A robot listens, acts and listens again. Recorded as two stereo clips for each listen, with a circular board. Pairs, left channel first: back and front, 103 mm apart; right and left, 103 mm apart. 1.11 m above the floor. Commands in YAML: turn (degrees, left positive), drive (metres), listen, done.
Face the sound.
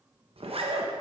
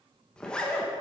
turn: -10
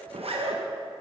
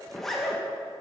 done: "Facing the zipper, 1 to 2 m away."